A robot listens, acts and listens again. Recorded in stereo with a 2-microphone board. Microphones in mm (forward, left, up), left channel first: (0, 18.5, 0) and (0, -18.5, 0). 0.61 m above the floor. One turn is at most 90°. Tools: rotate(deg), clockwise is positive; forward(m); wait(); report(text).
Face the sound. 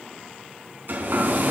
rotate(65)
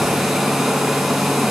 report("Facing the hair dryer, over 4 m away.")